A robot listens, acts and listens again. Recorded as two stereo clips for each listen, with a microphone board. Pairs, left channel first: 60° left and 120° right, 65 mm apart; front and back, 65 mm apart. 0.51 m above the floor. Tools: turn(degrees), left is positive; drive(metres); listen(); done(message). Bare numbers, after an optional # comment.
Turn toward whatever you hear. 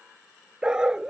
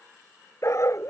# The dog barking: 40° right.
turn(-40)
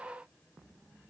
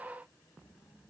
listen()
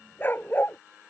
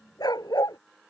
done("Found it: a dog barking, straight ahead.")